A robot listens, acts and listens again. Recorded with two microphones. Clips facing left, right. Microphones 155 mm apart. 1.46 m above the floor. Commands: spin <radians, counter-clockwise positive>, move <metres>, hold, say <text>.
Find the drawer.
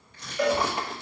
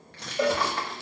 spin 0.35
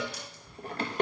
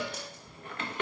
spin 2.44
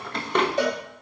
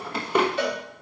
spin -0.17
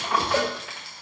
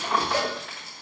say Facing the drawer, 1 to 2 m away.